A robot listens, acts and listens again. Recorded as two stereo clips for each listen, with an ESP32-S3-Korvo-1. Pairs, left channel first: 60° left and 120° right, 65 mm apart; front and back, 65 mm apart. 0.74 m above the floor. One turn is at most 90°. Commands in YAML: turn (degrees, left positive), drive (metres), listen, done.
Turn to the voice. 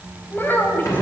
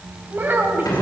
turn: 90
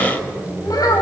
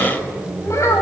turn: 40
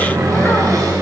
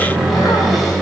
listen: true
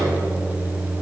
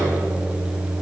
listen: true
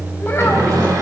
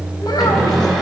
done: "Facing where the child speaking came from. I can't hear it now."